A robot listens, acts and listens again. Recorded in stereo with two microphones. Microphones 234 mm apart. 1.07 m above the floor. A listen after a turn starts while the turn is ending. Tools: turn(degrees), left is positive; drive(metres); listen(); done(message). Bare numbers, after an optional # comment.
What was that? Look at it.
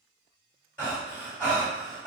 turn(30)
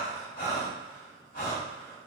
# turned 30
# So it is at 140° left.
turn(140)
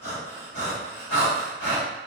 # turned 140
# The breathing is now 55° left.
turn(55)
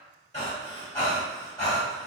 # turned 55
# The breathing is now 15° left.
turn(15)
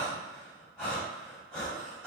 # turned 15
done("Found it: breathing, straight ahead.")